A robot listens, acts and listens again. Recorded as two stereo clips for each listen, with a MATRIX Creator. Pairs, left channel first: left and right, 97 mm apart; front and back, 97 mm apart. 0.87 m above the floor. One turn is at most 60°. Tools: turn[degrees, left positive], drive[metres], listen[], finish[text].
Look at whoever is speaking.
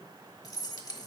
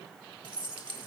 Action: listen[]
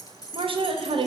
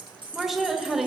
Thought: The woman speaking: 90° right.
Action: turn[-60]
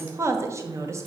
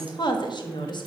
Thought: The woman speaking is now 30° right.
Action: turn[-30]
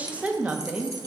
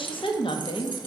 Thought: The woman speaking is now 15° right.
Action: turn[-15]
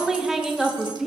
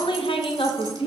Action: finish[Facing the woman speaking.]